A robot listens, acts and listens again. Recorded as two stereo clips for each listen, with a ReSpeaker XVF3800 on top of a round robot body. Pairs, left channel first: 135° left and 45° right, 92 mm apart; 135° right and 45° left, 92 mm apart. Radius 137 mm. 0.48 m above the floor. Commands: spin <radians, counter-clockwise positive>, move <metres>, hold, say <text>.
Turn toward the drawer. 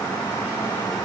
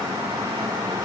hold
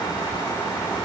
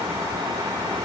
hold
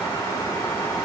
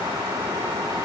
say I can't make out a drawer.